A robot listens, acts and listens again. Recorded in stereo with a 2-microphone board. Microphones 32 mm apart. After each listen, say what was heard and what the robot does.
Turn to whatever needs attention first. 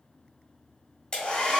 Keep listening.
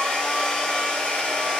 Keep listening.
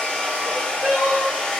The crying: about 50° right or 130° right. Turn 50° right.
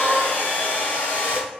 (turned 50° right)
So it is at 70° right. Turn 70° right.
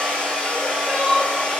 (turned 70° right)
Facing the crying.